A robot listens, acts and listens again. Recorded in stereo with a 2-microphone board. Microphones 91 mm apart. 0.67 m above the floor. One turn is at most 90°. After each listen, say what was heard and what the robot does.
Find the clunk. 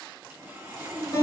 Keep listening.
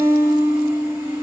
Keep listening.
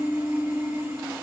I can't make out a clunk to turn to.